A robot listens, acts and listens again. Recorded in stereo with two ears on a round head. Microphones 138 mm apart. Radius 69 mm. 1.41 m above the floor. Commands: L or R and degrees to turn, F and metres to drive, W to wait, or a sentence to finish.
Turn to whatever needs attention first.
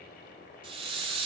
W
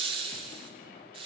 W
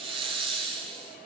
I can't make out anything urgent to turn to.